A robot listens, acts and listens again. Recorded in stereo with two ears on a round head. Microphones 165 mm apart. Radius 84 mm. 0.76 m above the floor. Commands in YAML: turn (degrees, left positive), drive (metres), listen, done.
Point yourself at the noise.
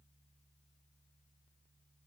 listen: true
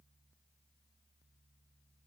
listen: true
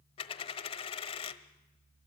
turn: 30
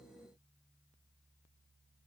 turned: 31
listen: true
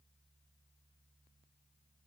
done: "I heard a dropped coin, but can't make it out now. It was about straight ahead or 120° left."